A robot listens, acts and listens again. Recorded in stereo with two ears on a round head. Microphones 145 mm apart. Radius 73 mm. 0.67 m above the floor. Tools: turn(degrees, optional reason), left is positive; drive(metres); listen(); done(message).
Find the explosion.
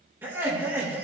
listen()
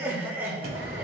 turn(degrees=-65, reason="The explosion: about 65° right or 115° right.")
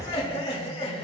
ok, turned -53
turn(degrees=-55, reason="So it is at 55° right.")
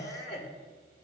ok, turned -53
done("Facing where the explosion came from. I can't hear it now.")